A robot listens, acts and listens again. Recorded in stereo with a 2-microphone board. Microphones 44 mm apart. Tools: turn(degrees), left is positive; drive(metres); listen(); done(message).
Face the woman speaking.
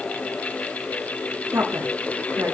turn(degrees=-70)
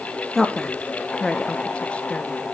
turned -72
turn(degrees=20)
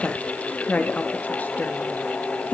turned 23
turn(degrees=40)
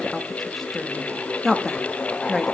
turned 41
done("Found it: a woman speaking, straight ahead.")